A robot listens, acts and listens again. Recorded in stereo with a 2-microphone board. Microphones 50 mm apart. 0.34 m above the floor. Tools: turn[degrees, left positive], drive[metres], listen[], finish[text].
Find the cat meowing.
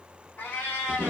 Thought: The cat meowing: about 40° left or 140° left.
Action: turn[40]
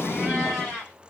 Action: finish[Found it: a cat meowing, straight ahead, 2 to 4 m away.]